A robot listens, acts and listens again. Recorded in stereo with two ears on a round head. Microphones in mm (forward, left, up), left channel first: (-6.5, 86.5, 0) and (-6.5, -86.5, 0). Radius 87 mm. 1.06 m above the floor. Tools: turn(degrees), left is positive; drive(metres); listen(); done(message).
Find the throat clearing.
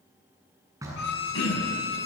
turn(degrees=90)
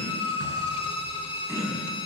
turn(degrees=-15)
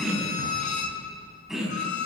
done("Facing the throat clearing.")